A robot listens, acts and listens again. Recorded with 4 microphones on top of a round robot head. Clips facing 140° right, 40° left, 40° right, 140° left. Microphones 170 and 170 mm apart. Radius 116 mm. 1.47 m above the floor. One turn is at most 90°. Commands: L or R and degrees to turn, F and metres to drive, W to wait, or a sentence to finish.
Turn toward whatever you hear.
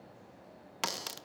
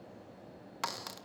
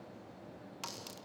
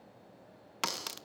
L90
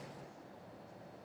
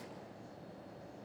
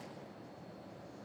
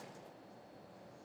L65
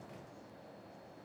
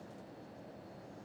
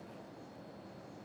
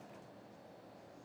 I heard a crack from this way, but can't make it out now.